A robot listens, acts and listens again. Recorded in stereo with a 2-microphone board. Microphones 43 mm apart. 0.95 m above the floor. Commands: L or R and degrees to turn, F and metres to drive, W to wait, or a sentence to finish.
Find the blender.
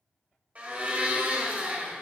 R30
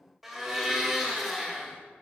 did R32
Facing the blender.